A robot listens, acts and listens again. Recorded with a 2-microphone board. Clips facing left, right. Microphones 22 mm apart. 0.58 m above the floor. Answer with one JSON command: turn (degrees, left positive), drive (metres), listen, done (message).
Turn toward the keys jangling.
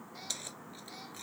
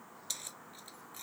{"turn": 30}
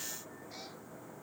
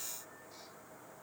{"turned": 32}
{"listen": true}
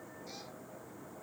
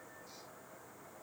{"listen": true}
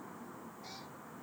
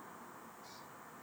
{"done": "I heard keys jangling, but can't make it out now. It was about 25° right or 140° left."}